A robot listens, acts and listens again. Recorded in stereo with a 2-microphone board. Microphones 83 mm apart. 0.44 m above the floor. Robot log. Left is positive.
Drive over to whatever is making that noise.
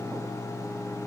cmd idle
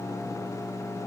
cmd idle
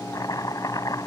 note: The chopping: about 45° left or 135° left.
cmd yaw +45
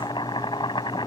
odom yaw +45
note: So it is at 85° left.
cmd yaw +85
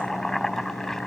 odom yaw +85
cmd fwd 1.0
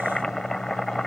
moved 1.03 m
cmd fwd 1.0
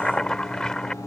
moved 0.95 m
note: The chopping is now 10° left.
cmd yaw +10
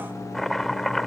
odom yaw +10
cmd fwd 1.0
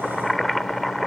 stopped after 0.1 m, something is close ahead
end: Arrived at the chopping, straight ahead.